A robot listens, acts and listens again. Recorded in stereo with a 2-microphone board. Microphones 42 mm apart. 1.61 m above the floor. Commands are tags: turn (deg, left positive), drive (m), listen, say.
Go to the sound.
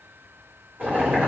<turn deg="-55"/>
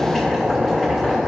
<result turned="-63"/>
<turn deg="10"/>
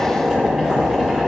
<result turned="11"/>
<drive m="1.0"/>
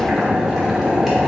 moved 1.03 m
<turn deg="-10"/>
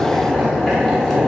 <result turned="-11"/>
<drive m="1.0"/>
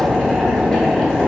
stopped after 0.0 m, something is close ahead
<turn deg="10"/>
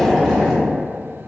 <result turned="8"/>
<say>Arrived at the boiling, straight ahead.</say>